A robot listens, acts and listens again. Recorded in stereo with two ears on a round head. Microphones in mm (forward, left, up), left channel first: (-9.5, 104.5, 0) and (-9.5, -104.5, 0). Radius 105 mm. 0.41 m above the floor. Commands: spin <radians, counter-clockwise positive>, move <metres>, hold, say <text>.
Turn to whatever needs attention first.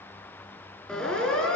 spin 0.52
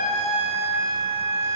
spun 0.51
spin -0.44
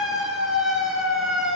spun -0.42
say Facing the siren, over 4 m away.